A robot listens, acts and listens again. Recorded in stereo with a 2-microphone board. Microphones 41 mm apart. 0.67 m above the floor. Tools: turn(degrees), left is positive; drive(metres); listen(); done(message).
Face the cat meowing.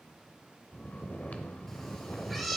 turn(degrees=30)
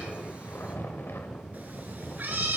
turn(degrees=-55)
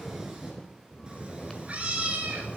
turn(degrees=-35)
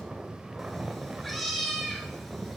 done("Facing the cat meowing, 1 to 2 m away.")